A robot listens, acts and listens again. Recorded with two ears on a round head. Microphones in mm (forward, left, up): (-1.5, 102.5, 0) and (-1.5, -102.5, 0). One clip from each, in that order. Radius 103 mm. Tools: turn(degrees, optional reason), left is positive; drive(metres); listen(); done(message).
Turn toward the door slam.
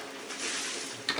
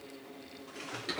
listen()
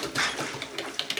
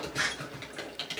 turn(degrees=90)
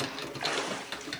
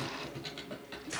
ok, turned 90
done("Facing where the door slam came from. I can't hear it now.")